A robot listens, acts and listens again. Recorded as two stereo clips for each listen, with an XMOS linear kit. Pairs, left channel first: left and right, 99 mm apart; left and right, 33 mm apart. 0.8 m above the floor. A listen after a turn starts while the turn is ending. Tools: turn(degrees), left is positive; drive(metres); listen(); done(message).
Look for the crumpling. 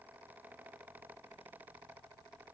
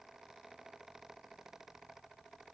listen()
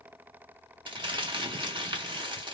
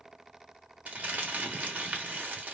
turn(degrees=-55)
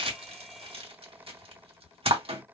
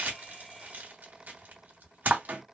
turn(degrees=-70)
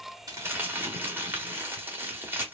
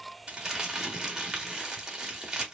turn(degrees=-20)
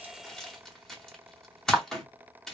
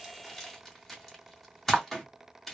done("Facing the crumpling.")